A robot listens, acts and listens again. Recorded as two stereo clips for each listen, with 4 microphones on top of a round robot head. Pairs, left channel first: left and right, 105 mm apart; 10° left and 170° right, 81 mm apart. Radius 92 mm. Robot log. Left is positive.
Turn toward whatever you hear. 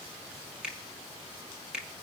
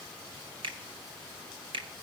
note: The finger snap: 175° right.
cmd yaw -175
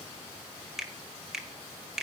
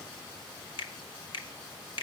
end: Found it: a finger snap, straight ahead.